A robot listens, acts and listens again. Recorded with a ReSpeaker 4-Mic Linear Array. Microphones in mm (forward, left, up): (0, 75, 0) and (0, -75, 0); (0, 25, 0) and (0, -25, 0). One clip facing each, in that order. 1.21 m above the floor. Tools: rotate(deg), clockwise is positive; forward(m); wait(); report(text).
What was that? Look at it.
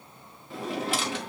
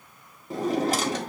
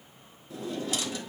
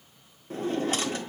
rotate(40)
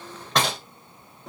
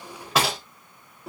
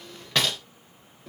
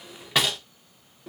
report("Facing the drawer, under 1 m away.")